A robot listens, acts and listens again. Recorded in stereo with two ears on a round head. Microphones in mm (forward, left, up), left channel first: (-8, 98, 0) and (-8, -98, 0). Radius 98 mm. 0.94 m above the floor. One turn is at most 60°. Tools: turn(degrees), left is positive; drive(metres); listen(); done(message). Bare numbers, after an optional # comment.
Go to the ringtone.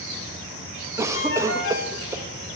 # The ringtone: about 60° left or 120° left.
turn(60)
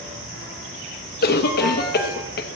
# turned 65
listen()
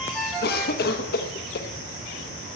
drive(1.0)
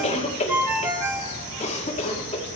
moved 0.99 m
# The ringtone is now 10° right.
turn(-10)
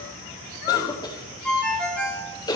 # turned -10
drive(1.0)
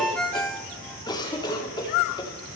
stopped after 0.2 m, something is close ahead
done("Arrived at the ringtone, straight ahead.")